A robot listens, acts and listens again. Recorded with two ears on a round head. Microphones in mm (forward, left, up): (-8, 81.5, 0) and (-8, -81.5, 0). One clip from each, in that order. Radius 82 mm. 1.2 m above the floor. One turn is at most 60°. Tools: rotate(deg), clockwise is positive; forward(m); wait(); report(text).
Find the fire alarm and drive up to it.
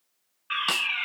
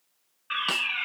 rotate(-20)
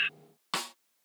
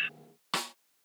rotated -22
rotate(-60)
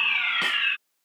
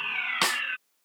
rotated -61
rotate(-60)
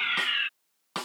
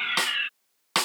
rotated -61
rotate(-15)
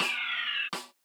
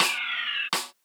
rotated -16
forward(1.0)
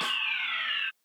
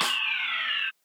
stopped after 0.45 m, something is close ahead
report("Blocked. The fire alarm is further on, straight ahead.")